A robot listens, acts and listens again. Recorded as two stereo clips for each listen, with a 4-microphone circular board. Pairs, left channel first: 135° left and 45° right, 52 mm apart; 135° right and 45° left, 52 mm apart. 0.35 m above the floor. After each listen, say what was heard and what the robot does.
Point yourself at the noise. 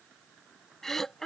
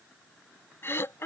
The throat clearing: 145° right. Turn 145° right.
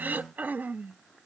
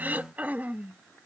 Facing the throat clearing.